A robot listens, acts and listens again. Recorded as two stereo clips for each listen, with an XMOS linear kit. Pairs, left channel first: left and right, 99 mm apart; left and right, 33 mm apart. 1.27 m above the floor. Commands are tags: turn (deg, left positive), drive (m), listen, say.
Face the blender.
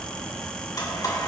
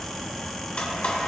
<turn deg="40"/>
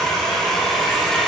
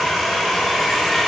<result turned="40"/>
<say>Found it: a blender, straight ahead.</say>